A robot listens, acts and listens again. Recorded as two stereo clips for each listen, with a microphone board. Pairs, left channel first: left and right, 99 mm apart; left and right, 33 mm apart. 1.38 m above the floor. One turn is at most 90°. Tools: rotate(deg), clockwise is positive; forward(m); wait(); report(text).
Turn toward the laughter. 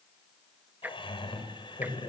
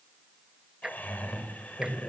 rotate(-50)
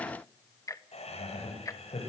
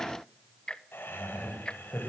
rotate(-85)
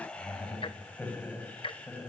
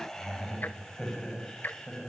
rotate(-15)
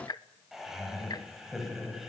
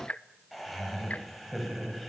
report("Found it: laughter, straight ahead.")